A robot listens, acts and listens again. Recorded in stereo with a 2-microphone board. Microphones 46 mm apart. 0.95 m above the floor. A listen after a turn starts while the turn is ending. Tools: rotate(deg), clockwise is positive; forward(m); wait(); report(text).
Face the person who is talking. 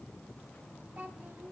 rotate(45)
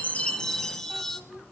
report("Facing the child speaking.")